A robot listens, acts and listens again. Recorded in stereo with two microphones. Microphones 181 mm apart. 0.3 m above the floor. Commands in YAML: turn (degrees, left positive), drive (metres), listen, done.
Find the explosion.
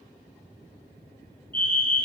listen: true
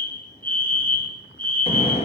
turn: 35
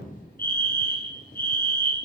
listen: true
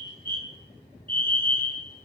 done: "I heard an explosion, but can't make it out now. It was about straight ahead or 110° left."